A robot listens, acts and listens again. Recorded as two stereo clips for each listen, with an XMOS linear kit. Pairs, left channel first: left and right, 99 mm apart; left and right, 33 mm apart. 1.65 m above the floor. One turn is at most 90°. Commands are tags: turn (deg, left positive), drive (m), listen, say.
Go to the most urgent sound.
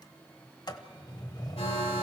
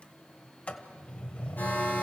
<turn deg="90"/>
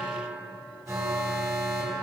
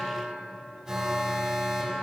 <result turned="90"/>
<drive m="1.0"/>
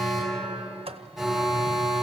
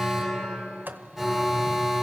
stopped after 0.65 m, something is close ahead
<say>Blocked. The alarm is further on, straight ahead.</say>